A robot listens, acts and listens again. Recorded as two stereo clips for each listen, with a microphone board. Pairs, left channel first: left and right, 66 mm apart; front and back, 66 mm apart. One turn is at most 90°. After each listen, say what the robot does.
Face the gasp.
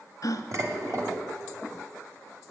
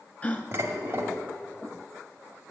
Turn 65° left.
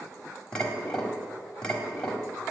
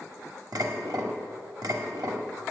I heard a gasp from this way, but can't make it out now.